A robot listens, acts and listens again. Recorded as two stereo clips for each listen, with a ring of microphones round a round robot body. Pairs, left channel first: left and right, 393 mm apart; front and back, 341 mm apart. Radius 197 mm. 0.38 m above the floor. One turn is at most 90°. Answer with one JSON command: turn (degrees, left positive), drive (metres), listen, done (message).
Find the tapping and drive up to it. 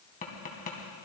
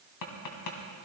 {"turn": 20}
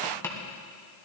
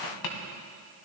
{"drive": 1.0}
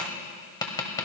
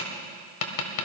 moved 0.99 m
{"turn": 10}
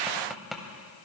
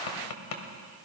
{"drive": 1.0}
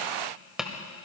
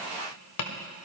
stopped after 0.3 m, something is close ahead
{"done": "I am next to the tapping."}